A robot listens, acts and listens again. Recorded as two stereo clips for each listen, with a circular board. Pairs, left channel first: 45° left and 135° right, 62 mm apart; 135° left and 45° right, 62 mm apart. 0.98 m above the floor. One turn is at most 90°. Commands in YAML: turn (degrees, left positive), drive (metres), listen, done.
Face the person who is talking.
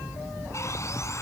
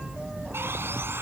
listen: true
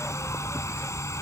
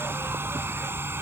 listen: true
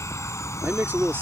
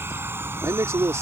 turn: -80
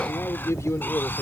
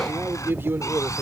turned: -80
done: "Found it: a man speaking, straight ahead."